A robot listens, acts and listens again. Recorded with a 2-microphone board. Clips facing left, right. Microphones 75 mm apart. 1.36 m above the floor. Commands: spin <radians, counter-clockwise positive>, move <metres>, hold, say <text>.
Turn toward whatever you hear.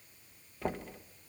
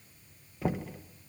spin 0.52
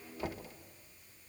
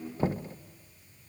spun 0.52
spin -0.61
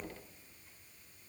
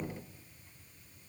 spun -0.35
spin -0.26
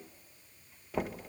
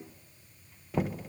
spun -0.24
say Found it: knocking, straight ahead.